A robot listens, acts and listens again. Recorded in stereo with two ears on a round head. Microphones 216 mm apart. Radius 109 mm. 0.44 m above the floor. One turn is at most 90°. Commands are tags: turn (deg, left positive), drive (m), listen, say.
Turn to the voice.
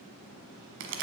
<listen/>
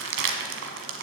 <listen/>
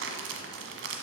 <say>I can't make out anyone speaking to turn to.</say>